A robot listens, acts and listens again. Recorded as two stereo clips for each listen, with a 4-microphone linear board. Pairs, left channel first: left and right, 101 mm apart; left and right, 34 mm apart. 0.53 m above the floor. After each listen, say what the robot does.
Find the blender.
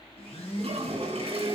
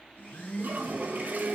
Turn 90° left.
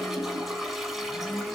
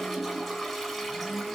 Keep listening.
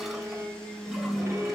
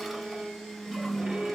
Turn 10° left.
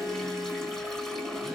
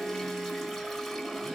Keep listening.
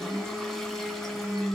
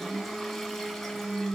Found it: a blender, straight ahead.